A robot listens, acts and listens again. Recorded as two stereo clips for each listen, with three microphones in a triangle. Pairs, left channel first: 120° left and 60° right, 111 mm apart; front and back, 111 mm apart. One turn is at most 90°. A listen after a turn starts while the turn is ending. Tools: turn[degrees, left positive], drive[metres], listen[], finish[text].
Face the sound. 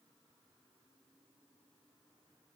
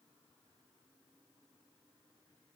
Action: listen[]
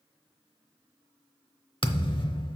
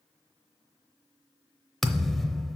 Thought: The thud: 90° left.
Action: turn[90]
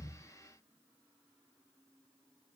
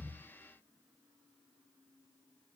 Action: finish[I heard a thud from this way, but can't make it out now.]